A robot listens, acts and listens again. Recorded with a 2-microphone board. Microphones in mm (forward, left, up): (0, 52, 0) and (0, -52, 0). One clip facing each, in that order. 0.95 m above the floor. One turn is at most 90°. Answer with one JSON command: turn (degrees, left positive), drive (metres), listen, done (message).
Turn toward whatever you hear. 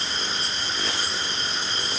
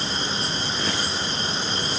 {"listen": true}
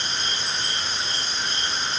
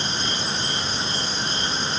{"listen": true}
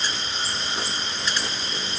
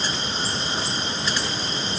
{"done": "I can't make out anything to turn to."}